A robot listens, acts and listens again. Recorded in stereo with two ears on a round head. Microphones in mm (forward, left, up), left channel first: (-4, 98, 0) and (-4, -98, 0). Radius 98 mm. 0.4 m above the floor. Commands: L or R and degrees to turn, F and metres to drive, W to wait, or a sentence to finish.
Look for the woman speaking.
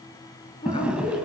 L25
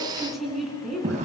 Facing the woman speaking.